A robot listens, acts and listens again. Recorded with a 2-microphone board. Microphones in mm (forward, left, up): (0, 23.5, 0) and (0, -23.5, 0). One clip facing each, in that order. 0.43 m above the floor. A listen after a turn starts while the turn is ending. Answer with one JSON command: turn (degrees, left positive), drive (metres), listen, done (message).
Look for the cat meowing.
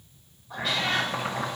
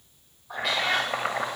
{"turn": -90}
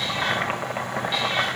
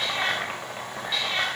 {"listen": true}
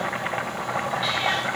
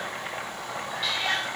{"listen": true}
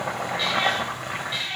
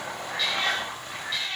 {"turn": 15}
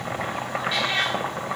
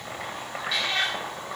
{"turn": 10}
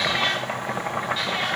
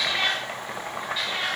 {"done": "Facing the cat meowing, over 4 m away."}